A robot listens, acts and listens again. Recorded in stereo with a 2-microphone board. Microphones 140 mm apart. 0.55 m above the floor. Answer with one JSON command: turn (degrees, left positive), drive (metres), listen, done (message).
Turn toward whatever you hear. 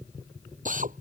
{"turn": -70}
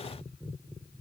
{"listen": true}
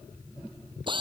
{"turn": -35}
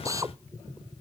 {"turn": -25}
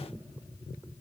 {"listen": true}
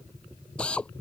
{"done": "Facing the drill."}